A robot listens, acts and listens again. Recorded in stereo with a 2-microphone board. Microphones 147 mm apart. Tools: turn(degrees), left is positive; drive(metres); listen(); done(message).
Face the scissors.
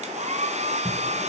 turn(degrees=-20)
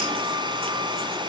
listen()
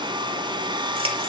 listen()
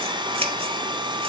turn(degrees=-140)
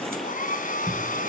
turn(degrees=-40)
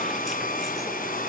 listen()
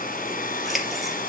done("Facing the scissors, 2 to 4 m away.")